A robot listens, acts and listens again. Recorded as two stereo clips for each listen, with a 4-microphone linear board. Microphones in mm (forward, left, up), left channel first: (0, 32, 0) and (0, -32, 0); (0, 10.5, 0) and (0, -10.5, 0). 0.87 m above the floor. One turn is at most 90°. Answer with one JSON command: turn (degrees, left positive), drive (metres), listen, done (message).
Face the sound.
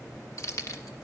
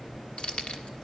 {"turn": 55}
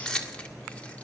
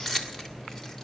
{"turn": 15}
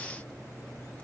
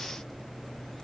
{"listen": true}
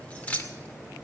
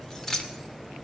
{"turn": 25}
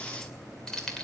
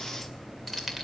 {"turn": 10}
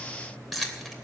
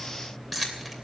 {"done": "Facing the keys jangling, 2 to 4 m away."}